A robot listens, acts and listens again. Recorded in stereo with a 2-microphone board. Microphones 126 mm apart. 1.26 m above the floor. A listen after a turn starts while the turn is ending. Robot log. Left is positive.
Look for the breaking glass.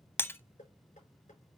note: The breaking glass: about 15° left or 165° left.
cmd yaw +15
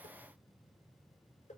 cmd idle
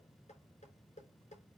end: I heard breaking glass, but can't make it out now. It was about straight ahead or 150° left.